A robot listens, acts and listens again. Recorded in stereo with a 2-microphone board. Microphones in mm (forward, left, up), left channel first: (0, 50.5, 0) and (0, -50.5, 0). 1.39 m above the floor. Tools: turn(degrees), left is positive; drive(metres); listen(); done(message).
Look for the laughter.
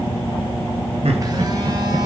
turn(degrees=-90)
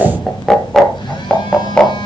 turn(degrees=10)
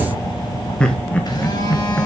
turn(degrees=15)
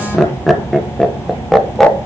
done("Facing the laughter.")